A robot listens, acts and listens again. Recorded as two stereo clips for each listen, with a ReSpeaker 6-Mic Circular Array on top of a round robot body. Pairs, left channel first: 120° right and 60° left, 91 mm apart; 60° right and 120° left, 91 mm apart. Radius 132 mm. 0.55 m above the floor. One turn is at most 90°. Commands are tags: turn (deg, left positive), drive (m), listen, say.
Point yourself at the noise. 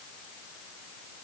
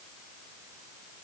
<listen/>
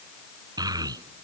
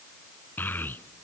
<turn deg="10"/>
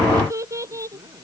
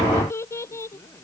<say>Found it: a child speaking, straight ahead.</say>